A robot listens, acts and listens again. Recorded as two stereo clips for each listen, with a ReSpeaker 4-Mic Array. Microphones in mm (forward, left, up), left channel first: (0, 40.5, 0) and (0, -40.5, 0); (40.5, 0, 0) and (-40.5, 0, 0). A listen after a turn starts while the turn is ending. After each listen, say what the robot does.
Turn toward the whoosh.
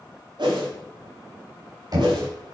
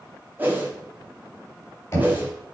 Turn 115° right.
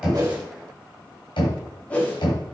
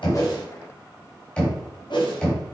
Turn 15° left.
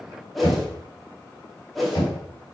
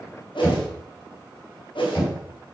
Facing the whoosh, 1 to 2 m away.